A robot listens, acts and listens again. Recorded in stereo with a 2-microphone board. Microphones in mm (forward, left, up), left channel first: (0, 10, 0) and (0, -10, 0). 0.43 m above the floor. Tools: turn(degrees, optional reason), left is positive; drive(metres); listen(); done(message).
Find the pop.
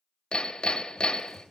listen()
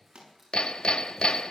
turn(degrees=-70, reason="The pop: about 70° right or 110° right.")
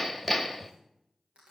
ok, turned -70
listen()
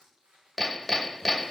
done("I heard a pop, but can't make it out now. It was about straight ahead or 40° right.")